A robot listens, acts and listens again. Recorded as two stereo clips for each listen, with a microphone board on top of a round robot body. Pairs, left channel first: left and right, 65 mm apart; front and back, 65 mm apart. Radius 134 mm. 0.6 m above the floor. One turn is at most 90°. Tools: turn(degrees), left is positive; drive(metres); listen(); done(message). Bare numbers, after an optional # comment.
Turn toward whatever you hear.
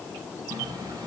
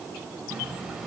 # The running tap: 100° right.
turn(-90)
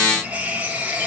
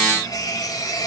# The running tap is now 20° right.
turn(-20)
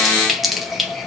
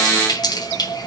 done("Found it: a running tap, straight ahead, 2 to 4 m away.")